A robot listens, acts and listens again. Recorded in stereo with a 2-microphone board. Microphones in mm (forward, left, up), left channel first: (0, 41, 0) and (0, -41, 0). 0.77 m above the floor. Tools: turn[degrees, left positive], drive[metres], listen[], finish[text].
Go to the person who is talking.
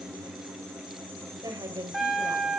Thought: The woman speaking: about 45° right or 135° right.
Action: turn[-45]
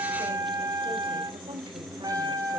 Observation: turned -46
Thought: So it is at 90° right.
Action: turn[-90]
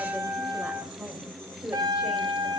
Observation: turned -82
Thought: The woman speaking is now 10° right.
Action: turn[-10]
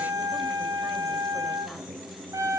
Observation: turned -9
Action: listen[]
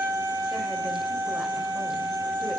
Action: listen[]
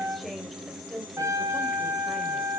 Action: drive[1.0]
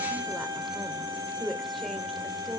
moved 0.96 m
Action: drive[1.0]
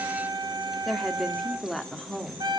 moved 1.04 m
Action: drive[1.0]
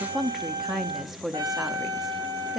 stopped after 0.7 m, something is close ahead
Action: finish[Arrived at the woman speaking, straight ahead.]